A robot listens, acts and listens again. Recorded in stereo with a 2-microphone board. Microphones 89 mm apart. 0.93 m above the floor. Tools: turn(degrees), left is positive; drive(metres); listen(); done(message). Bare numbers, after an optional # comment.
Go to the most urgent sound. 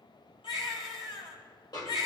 turn(90)
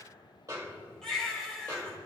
drive(1.0)
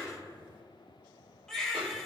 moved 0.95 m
drive(1.0)
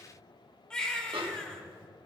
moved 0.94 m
# The baby crying is now 10° left.
turn(10)
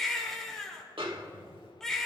drive(1.0)
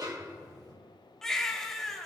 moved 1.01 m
drive(1.0)
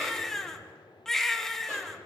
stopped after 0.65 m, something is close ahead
done("I am next to the baby crying.")